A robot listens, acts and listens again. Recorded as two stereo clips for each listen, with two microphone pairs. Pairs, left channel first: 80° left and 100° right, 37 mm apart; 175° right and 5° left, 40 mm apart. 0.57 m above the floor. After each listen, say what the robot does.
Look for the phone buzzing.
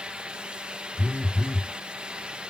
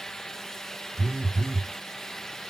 Turn 15° left.
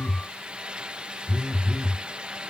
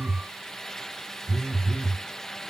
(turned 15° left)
Facing the phone buzzing.